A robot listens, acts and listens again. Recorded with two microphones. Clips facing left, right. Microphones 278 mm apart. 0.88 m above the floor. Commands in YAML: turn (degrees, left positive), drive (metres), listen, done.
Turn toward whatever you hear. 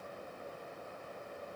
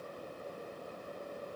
listen: true
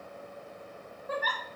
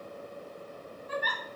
turn: 50
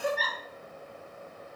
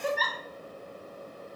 done: "Found it: a giggle, straight ahead, 1 to 2 m away."